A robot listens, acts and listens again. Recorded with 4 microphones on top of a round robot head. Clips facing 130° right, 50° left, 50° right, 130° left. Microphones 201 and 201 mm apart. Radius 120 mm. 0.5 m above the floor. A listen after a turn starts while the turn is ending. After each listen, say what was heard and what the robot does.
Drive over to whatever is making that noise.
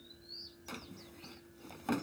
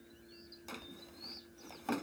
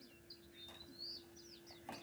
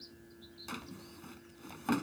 The drawer: 140° left. Turn 140° left.
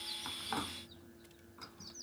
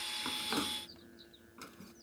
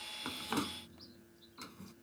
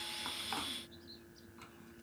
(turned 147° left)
The drawer is now 10° right. Turn 10° right.
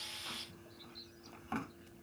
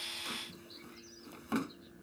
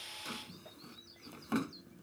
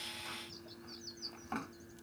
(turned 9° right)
Drive 1.0 m forward.
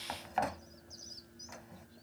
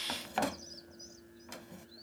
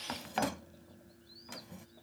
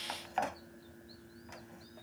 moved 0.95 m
Drive 1.0 m forward.
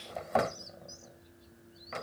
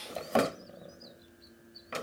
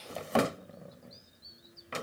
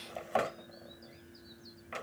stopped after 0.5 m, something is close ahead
I am next to the drawer.